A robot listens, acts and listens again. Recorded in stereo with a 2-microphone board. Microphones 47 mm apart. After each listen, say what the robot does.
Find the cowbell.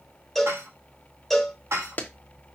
Turn 30° left.
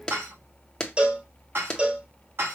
Turn 25° right.
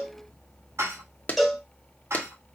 Found it: a cowbell, straight ahead.